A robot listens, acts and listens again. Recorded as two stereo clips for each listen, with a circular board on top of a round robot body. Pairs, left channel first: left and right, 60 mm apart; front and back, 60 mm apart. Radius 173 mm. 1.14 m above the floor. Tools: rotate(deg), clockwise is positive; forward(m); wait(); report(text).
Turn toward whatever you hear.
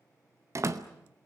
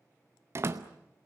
rotate(130)
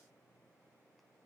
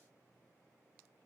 report("Facing where the door slam came from. I can't hear it now.")